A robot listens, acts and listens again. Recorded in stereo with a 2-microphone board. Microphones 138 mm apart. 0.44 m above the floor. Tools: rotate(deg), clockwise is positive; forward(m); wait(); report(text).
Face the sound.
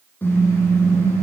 rotate(-15)
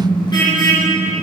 rotate(-150)
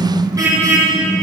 rotate(25)
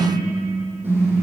rotate(15)
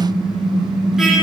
report("Found it: a car horn, straight ahead, over 4 m away.")